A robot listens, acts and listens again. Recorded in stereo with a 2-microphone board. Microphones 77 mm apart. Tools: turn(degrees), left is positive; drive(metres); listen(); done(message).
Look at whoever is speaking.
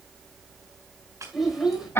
turn(degrees=-30)
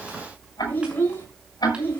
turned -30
turn(degrees=25)
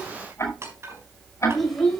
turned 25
done("Found it: a child speaking, straight ahead, over 4 m away.")